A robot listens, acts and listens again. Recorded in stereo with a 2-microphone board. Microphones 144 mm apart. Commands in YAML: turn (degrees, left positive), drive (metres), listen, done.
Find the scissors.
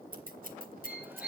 turn: -70
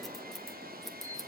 done: "Facing the scissors."